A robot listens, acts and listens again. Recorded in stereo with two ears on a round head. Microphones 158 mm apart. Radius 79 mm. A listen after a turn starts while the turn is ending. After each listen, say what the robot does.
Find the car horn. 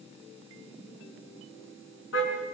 Turn 90° left.
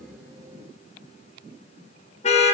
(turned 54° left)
Turn 40° left.
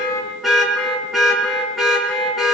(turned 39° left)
Facing the car horn.